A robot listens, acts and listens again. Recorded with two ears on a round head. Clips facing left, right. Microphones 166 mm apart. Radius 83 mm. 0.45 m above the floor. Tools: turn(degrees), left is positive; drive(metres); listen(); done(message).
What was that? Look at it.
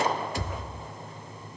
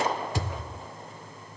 turn(degrees=-65)
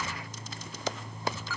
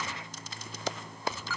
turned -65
listen()
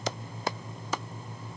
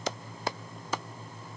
done("I heard a thud, but can't make it out now. It was about straight ahead or 50° right.")